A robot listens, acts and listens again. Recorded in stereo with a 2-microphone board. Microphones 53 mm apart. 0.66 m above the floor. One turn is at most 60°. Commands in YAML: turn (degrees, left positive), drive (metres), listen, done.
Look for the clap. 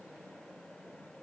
listen: true
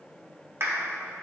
turn: -50
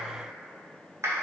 turn: -60
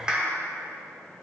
turn: -20
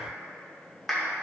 done: "Facing the clap."